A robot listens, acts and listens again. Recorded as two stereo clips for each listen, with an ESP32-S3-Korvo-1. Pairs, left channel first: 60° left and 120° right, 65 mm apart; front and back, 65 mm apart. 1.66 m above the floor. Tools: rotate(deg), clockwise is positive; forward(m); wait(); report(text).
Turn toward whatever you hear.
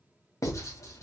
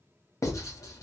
rotate(-30)
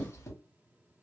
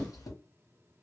rotate(-15)
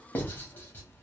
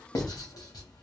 report("Facing the writing, under 1 m away.")